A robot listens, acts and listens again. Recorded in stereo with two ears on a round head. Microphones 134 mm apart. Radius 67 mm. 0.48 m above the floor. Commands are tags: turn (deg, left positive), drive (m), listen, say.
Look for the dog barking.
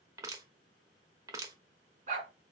<turn deg="-55"/>
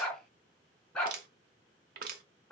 <say>Found it: a dog barking, straight ahead.</say>